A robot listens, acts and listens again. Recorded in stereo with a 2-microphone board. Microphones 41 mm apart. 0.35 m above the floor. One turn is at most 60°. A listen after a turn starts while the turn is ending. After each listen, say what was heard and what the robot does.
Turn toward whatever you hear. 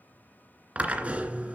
The drill: about 35° right or 145° right. Turn 35° right.
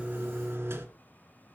So it is at 110° right. Turn 60° right.
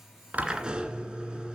The drill is now 20° right. Turn 20° right.
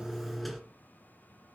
Found it: a drill, straight ahead, 2 to 4 m away.